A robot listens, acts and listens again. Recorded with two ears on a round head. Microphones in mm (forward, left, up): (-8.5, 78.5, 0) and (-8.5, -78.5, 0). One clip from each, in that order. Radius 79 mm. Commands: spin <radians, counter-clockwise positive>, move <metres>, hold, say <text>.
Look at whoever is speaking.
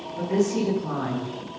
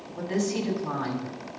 spin -1.22
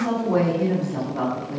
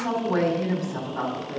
spin -0.70
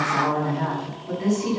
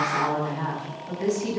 spin -0.17
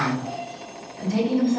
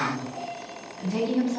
say Found it: a woman speaking, straight ahead.